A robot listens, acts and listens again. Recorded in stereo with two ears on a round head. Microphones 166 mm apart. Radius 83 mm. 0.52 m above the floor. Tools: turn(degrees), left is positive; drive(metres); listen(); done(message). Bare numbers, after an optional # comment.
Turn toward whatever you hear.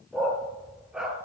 turn(-30)
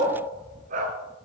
# So it is at 135° right.
turn(-135)
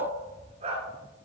# The dog barking is now 35° right.
turn(-35)
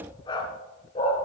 # The dog barking is now 35° left.
turn(35)
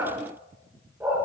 # The dog barking is now 10° right.
turn(-10)
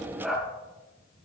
done("Found it: a dog barking, straight ahead.")